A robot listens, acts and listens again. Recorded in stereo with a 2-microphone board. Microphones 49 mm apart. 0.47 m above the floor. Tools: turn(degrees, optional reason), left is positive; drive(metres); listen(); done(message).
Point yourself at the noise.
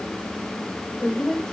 turn(degrees=25, reason="The woman speaking: about 25° left or 155° left.")
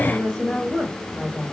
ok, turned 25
turn(degrees=30)
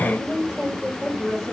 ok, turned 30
done("Facing the woman speaking.")